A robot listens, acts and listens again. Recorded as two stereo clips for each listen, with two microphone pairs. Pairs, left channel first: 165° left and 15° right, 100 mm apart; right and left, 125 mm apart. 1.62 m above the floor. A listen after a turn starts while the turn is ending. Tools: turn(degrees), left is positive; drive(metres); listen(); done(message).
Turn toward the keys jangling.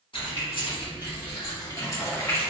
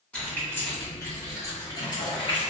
turn(degrees=-125)
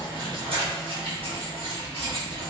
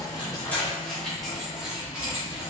turn(degrees=15)
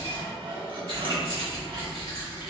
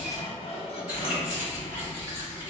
turn(degrees=20)
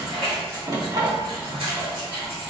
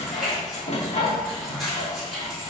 done("Facing the keys jangling.")